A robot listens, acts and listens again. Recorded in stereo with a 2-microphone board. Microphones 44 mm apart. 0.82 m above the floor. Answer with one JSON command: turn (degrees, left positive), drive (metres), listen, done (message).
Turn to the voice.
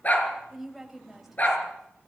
{"turn": -30}
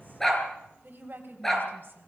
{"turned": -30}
{"turn": -130}
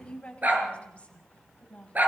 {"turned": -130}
{"turn": 30}
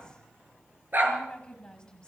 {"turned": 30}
{"turn": 20}
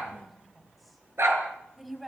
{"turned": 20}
{"done": "Found it: a woman speaking, straight ahead, over 4 m away."}